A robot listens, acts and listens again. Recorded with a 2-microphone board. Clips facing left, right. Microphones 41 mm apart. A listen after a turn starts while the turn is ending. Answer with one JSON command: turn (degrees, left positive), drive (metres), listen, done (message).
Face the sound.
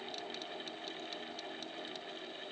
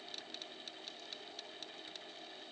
{"listen": true}
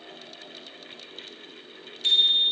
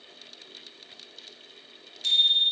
{"turn": 25}
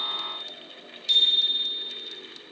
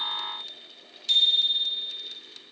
{"done": "Facing the bicycle bell."}